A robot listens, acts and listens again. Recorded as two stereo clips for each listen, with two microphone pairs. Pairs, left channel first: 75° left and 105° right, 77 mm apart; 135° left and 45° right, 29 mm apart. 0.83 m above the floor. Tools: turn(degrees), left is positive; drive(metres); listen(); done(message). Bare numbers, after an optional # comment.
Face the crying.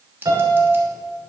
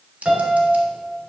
listen()
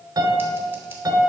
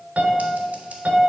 listen()
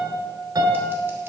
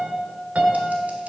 done("I can't make out crying to turn to.")